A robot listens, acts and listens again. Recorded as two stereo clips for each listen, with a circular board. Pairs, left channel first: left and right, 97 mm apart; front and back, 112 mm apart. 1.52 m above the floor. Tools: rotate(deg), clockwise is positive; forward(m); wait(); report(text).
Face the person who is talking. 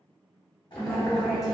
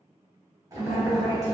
report("Facing the woman speaking.")